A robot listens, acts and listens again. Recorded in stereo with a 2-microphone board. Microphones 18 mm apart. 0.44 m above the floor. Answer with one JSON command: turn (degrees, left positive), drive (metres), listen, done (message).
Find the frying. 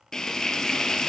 {"turn": 35}
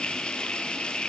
{"turn": 110}
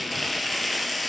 {"done": "Facing the frying."}